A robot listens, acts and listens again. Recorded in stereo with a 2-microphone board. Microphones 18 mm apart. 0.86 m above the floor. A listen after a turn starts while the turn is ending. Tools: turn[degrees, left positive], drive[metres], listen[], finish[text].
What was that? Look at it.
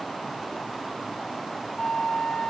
Thought: The flute: about 55° left or 125° left.
Action: turn[55]
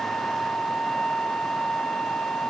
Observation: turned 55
Thought: So it is at 70° left.
Action: turn[70]
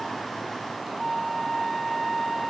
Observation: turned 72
Action: finish[Facing the flute.]